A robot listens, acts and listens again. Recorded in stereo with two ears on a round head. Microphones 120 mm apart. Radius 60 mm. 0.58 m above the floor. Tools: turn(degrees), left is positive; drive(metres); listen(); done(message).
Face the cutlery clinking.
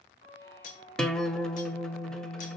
turn(degrees=65)
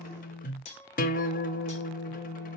turn(degrees=50)
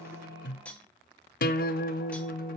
turn(degrees=10)
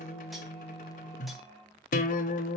listen()
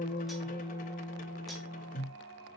listen()
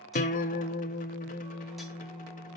done("Facing where the cutlery clinking came from. I can't hear it now.")